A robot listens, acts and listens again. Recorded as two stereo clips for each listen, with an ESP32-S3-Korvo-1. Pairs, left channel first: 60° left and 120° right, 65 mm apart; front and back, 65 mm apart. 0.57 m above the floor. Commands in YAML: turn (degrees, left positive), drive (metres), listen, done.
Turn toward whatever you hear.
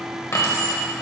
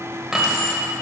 turn: 90
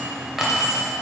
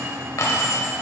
turn: -40
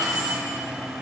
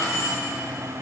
turn: -35
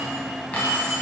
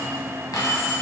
turn: -10
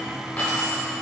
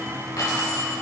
done: "Facing the keys jangling, 2 to 4 m away."